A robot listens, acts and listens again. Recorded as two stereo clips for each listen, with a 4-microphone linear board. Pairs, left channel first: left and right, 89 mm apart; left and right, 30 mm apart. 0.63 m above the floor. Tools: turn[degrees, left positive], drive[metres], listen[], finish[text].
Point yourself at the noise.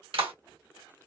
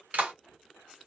Thought: The clap: about 75° right or 105° right.
Action: turn[-75]
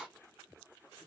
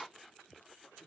Action: listen[]
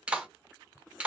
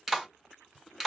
Thought: So it is at 15° right.
Action: turn[-15]
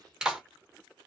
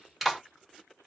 Thought: The clap is now 10° right.
Action: turn[-10]
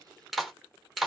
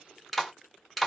Action: finish[Found it: a clap, straight ahead, 1 to 2 m away.]